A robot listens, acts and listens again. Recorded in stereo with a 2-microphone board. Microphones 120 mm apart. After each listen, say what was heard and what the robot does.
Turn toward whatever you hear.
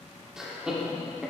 Turn 30° right.
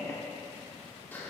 So it is at 20° left. Turn 20° left.
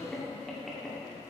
Facing the laughter.